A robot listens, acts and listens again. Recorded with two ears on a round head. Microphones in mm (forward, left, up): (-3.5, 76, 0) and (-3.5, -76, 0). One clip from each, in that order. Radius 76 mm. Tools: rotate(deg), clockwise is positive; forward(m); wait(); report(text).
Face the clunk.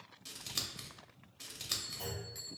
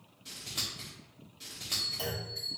rotate(35)
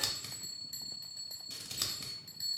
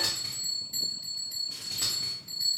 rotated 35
wait()
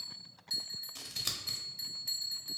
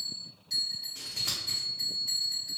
report("I heard a clunk, but can't make it out now. It was about straight ahead or 110° right.")